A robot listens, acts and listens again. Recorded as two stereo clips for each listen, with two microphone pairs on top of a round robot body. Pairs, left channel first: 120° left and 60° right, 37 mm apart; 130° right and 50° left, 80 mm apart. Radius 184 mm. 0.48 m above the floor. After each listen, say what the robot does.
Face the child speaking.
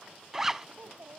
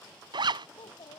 Turn 110° right.
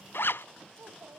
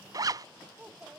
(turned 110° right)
Turn 25° right.
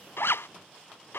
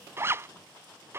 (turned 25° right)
Keep listening.
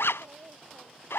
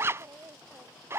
Turn 10° right.
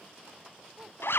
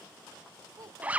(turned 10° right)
Keep listening.
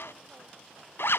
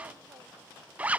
Keep listening.
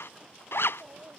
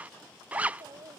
Facing the child speaking.